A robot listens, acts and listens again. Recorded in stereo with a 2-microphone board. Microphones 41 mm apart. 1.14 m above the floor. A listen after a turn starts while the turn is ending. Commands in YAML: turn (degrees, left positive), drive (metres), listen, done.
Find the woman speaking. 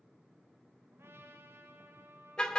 listen: true
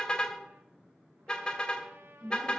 turn: -30
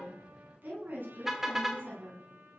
turn: -135
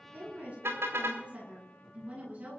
turn: -40
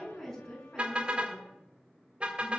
turn: 10
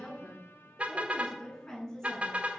turn: 10
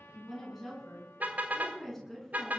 done: "Facing the woman speaking."